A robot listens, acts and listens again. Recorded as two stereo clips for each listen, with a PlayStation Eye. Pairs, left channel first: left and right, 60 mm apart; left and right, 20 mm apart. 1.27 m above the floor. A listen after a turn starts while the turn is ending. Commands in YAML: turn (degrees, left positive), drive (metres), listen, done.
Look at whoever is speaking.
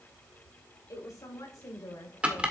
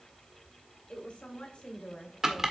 turn: 75
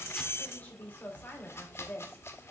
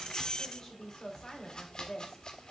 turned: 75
turn: 30
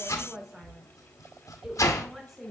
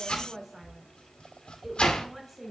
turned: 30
done: "Found it: a woman speaking, straight ahead, 2 to 4 m away."